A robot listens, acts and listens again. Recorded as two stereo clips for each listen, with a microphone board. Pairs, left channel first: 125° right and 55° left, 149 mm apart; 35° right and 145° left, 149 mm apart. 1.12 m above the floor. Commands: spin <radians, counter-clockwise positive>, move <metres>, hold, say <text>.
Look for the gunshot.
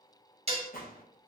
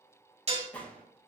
spin -2.01
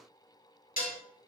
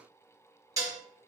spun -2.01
say I heard a gunshot from this way, but can't make it out now.